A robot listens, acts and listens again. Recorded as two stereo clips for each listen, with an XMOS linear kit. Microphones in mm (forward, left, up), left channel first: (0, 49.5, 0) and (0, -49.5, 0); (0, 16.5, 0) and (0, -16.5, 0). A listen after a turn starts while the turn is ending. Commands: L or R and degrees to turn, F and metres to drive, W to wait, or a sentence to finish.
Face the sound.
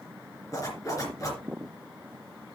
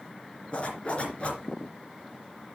L35
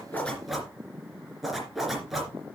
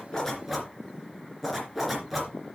Found it: a zipper, straight ahead, 2 to 4 m away.